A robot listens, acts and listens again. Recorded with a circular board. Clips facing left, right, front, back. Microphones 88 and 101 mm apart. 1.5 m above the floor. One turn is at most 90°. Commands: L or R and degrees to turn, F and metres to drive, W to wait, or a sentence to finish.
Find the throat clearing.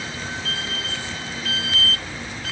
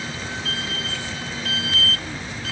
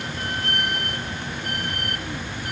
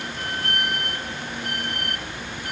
W
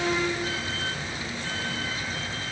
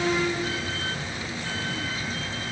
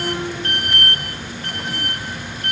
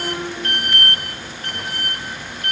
W
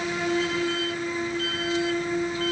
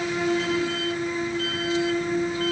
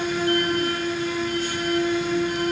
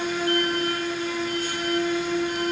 I can't make out throat clearing.